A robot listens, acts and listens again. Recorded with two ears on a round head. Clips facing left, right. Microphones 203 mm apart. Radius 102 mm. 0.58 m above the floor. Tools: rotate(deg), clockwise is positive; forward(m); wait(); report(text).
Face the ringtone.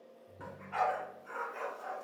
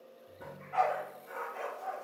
rotate(-30)
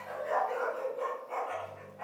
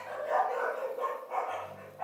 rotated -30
rotate(30)
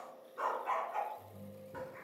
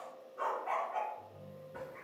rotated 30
report("Found it: a ringtone, straight ahead.")